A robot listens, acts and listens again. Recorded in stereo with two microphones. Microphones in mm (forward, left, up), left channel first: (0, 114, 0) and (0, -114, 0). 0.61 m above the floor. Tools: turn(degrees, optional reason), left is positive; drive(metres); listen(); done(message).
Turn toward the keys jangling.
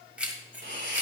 turn(degrees=-30)
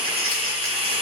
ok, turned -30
listen()
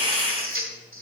listen()
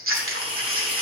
done("I heard keys jangling, but can't make it out now. It was about 25° left or 145° right.")